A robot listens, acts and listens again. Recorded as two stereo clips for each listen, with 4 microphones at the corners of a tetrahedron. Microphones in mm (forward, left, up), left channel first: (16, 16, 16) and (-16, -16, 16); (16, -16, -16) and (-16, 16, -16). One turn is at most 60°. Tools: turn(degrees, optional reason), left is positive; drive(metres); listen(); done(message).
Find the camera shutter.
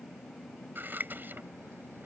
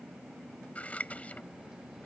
listen()
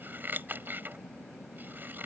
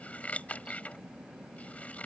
listen()
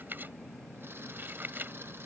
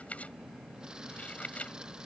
done("I can't make out a camera shutter to turn to.")